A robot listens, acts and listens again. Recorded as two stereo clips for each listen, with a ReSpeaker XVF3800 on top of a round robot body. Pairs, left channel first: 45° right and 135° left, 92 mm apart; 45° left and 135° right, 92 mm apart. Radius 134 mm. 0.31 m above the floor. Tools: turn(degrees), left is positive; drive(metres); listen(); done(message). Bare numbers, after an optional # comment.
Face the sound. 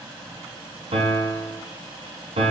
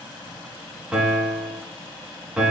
# The piano: 145° left.
turn(145)
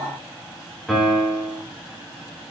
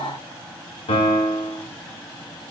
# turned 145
# The piano is now 40° left.
turn(40)
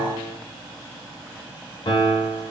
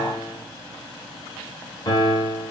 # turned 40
done("Found it: a piano, straight ahead, 1 to 2 m away.")